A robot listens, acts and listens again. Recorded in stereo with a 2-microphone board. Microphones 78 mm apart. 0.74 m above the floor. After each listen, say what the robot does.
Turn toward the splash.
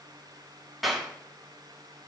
Keep listening.
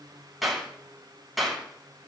Keep listening.
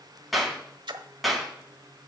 Turn 75° right.
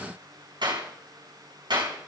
Keep listening.
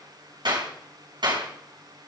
I heard a splash, but can't make it out now. It was about straight ahead or 30° right.